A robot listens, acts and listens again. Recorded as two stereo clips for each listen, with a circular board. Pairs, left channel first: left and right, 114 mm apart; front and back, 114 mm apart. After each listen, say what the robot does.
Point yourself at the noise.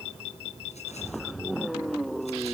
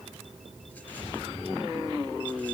Keep listening.
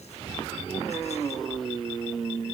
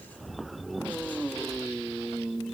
Keep listening.
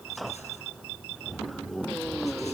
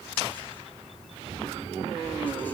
I can't make out anything.